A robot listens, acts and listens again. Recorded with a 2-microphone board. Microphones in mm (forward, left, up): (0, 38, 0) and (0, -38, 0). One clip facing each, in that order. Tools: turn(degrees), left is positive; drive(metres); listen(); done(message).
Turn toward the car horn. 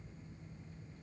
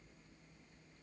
listen()
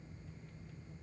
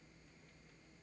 listen()
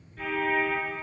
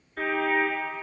turn(degrees=-70)
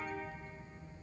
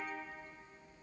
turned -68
listen()
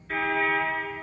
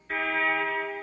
done("Facing the car horn, 2 to 4 m away.")